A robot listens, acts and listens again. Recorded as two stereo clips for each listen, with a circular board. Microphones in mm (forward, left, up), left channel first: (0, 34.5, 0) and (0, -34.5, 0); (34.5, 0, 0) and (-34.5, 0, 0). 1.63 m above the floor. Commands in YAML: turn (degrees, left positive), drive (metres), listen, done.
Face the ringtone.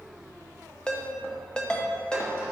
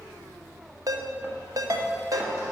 turn: 165
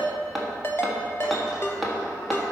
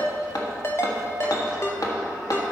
turn: 45
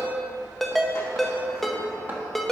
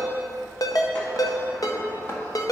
done: "Facing the ringtone."